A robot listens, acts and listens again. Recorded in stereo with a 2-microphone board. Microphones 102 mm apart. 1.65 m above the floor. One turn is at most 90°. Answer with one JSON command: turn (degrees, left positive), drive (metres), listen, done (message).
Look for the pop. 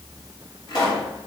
{"turn": 45}
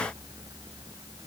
{"listen": true}
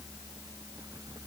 {"done": "I heard a pop, but can't make it out now. It was about straight ahead or 90° left."}